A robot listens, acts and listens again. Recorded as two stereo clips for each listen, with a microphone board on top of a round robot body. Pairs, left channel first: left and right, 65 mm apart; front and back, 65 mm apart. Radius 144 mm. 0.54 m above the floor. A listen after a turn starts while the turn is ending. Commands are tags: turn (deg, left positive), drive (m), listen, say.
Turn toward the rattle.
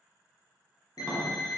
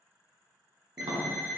<listen/>
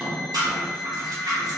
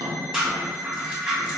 <turn deg="-105"/>
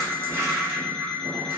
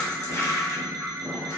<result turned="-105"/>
<turn deg="-35"/>
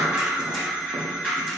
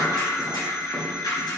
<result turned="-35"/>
<say>Facing the rattle.</say>